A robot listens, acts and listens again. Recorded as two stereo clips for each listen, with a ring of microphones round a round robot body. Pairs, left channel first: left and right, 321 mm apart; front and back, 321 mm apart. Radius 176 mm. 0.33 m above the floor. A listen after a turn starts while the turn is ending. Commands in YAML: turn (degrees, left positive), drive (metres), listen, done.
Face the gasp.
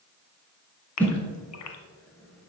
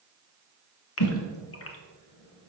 turn: 50
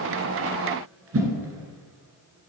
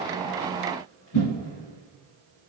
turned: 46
done: "Facing where the gasp came from. I can't hear it now."